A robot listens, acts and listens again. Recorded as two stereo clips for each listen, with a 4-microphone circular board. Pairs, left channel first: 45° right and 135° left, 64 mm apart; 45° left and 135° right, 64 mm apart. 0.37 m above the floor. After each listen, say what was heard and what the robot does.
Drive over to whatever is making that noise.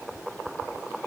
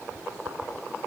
Keep listening.
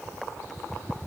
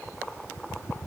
Keep listening.
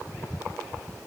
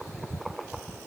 I can't make out anything.